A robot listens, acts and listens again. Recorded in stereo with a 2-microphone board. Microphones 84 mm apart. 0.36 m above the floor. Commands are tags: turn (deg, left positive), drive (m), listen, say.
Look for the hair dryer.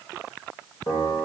<listen/>
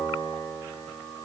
<listen/>
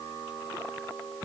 <say>I can't make out a hair dryer to turn to.</say>